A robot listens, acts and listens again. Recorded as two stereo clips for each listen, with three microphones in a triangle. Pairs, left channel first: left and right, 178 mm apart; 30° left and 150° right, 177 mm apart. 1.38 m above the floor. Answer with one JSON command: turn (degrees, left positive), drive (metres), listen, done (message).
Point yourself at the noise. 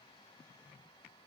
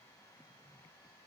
{"listen": true}
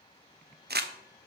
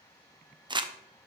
{"turn": -85}
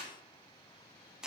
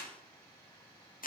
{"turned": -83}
{"done": "Found it: crumpling, straight ahead."}